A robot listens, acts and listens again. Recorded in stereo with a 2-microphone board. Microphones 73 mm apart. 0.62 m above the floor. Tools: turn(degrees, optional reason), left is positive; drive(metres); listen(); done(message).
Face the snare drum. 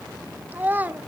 listen()
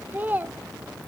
listen()
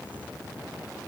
done("I can't make out a snare drum to turn to.")